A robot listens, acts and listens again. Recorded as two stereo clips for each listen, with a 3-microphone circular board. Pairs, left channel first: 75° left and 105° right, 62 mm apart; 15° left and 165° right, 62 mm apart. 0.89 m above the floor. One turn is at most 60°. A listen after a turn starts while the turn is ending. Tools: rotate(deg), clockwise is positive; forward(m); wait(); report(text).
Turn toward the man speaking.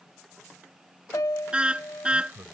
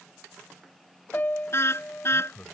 rotate(50)
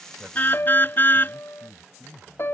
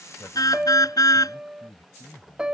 rotate(-10)
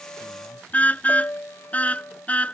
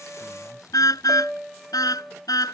wait()
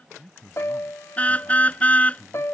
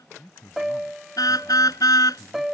report("Found it: a man speaking, straight ahead.")